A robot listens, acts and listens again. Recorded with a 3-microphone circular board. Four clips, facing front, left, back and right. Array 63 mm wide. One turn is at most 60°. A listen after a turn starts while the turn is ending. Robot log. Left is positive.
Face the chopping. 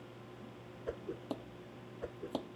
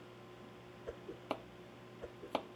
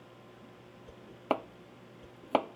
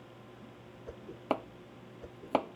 note: The chopping: 150° right.
cmd yaw -60
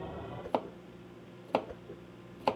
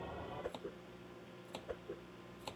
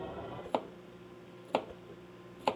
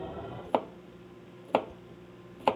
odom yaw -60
note: The chopping is now 85° right.
cmd yaw -60
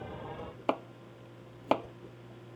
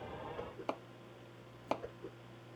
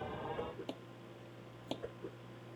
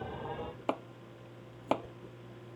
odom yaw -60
note: The chopping is now 20° right.
cmd yaw -20
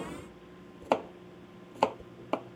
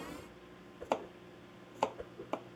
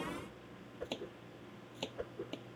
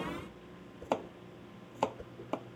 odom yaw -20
end: Found it: chopping, straight ahead.